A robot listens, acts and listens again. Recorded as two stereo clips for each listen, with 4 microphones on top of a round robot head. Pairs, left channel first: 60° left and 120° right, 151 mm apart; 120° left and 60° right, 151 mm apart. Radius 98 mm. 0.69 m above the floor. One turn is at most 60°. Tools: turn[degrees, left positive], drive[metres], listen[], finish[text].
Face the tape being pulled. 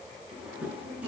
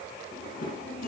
Action: listen[]
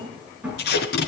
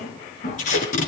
Thought: The tape being pulled: 80° left.
Action: turn[60]
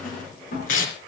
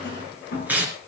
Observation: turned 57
Thought: The tape being pulled is now 20° left.
Action: turn[20]
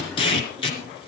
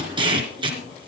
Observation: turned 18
Action: finish[Found it: tape being pulled, straight ahead.]